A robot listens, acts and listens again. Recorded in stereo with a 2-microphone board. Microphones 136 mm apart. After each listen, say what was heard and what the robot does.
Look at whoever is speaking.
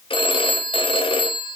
Keep listening.
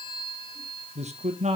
The man speaking: about 55° right or 125° right. Turn 55° right.
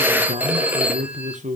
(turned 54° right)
So it is at 70° right. Turn 70° right.
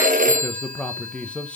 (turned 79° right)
The man speaking is now 10° left. Turn 10° left.
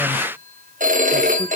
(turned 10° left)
Keep listening.
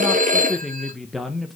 Facing the man speaking.